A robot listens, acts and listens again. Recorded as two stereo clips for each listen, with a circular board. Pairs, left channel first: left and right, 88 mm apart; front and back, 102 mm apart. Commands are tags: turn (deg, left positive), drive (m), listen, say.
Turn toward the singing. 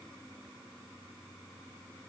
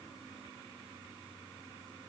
<listen/>
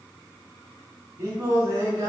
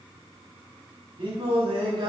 <turn deg="-140"/>
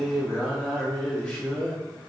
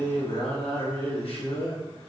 <turn deg="10"/>
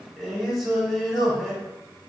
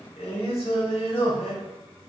<say>Facing the singing.</say>